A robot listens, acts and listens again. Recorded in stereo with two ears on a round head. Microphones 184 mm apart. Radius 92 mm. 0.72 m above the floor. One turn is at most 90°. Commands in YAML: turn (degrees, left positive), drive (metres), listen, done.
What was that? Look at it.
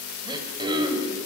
turn: -20
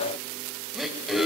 done: "Facing the throat clearing."